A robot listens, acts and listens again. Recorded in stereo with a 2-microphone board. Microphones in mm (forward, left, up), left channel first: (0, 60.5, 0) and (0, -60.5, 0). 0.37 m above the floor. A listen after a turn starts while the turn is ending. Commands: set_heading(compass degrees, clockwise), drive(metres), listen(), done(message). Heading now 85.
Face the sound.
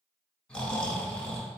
set_heading(55)
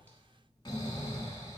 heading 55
set_heading(270)
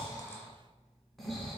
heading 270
done("Facing the snoring.")